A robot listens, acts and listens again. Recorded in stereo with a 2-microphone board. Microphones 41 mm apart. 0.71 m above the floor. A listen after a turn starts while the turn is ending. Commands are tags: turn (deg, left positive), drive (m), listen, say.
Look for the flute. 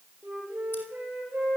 <turn deg="-40"/>
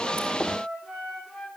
<say>Found it: a flute, straight ahead.</say>